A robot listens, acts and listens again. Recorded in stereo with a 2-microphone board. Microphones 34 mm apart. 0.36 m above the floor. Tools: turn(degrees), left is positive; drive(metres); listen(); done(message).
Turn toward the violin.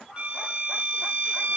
turn(degrees=-35)
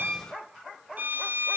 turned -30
turn(degrees=-110)
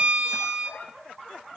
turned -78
turn(degrees=-35)
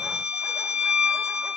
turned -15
turn(degrees=-15)
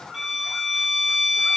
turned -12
done("Facing the violin, 1 to 2 m away.")